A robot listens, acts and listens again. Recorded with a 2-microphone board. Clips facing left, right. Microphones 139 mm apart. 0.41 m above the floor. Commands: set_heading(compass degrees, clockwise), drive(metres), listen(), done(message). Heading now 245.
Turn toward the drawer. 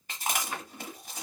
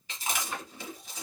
set_heading(215)
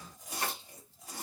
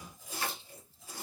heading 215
listen()
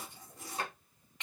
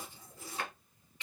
set_heading(75)
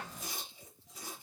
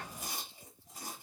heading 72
listen()
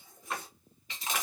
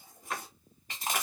done("Found it: a drawer, straight ahead.")